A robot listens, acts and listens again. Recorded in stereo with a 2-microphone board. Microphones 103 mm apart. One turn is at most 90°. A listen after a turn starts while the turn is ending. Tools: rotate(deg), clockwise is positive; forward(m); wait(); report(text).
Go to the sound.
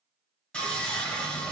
rotate(-30)
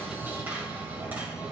rotate(20)
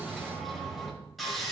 forward(1.0)
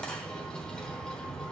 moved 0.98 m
rotate(-10)
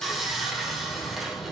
forward(1.0)
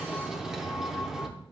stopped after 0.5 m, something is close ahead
report("I am next to the sawing.")